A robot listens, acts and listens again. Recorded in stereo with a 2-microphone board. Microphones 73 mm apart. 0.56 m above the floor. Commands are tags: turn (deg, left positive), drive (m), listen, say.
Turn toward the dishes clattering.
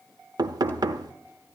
<listen/>
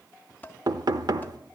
<turn deg="25"/>
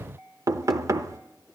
<listen/>
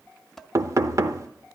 <say>Found it: dishes clattering, straight ahead, under 1 m away.</say>